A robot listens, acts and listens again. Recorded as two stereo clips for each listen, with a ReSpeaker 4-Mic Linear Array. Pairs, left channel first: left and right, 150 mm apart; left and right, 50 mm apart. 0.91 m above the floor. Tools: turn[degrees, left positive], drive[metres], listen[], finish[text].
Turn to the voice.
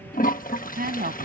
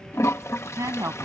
Action: turn[-90]
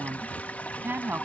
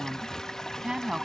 Thought: So it is at 15° right.
Action: turn[-15]
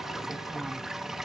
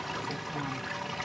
Action: listen[]
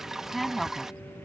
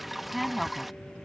Action: finish[Found it: a woman speaking, straight ahead.]